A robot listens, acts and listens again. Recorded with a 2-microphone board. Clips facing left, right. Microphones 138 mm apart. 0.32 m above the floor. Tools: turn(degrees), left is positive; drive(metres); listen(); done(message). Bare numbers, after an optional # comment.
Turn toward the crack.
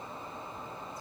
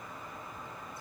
listen()
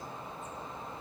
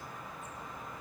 listen()
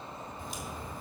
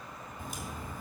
# The crack: about 50° right or 130° right.
turn(-50)
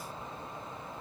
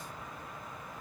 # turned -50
listen()
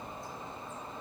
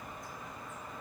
done("I heard a crack, but can't make it out now. It was about straight ahead or 80° right.")